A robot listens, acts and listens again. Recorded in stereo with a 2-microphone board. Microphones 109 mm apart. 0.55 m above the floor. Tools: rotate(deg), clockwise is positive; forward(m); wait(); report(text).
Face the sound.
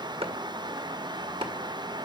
rotate(60)
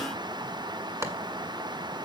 rotate(30)
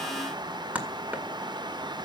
rotate(15)
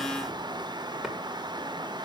wait()
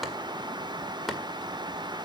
report("Facing the chopping, 1 to 2 m away.")